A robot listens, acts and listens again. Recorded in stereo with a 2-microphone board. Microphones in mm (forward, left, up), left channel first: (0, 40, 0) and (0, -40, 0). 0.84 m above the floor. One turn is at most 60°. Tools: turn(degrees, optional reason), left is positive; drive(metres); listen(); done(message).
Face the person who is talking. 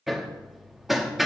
listen()
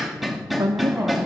turn(degrees=-55, reason="The woman speaking: about 55° right or 125° right.")
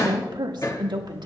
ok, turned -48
turn(degrees=-60, reason="So it is at 75° right.")
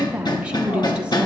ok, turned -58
turn(degrees=-15, reason="The woman speaking is now 15° right.")
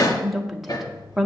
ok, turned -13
done("Facing the woman speaking.")